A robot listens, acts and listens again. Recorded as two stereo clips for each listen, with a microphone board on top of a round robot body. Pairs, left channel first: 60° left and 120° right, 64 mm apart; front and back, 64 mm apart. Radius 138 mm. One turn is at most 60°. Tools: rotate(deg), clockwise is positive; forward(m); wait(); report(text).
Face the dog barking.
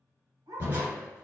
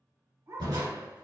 rotate(60)
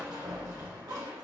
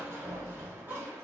rotate(60)
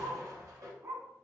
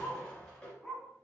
rotate(60)
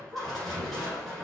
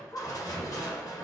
rotate(40)
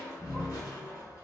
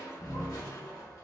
wait()
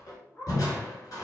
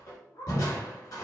report("Found it: a dog barking, straight ahead, 2 to 4 m away.")